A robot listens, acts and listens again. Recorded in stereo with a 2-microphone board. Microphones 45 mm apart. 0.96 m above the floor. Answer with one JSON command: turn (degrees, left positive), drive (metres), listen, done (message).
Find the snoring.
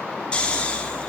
{"turn": 25}
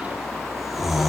{"done": "Facing the snoring, 2 to 4 m away."}